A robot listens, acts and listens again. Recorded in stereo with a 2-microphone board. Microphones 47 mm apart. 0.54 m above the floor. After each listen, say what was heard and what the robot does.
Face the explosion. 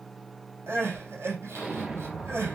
The explosion: about 20° right or 160° right. Turn 20° right.
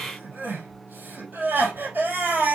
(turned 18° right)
Keep listening.
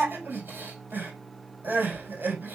I heard an explosion, but can't make it out now. It was about straight ahead or 145° right.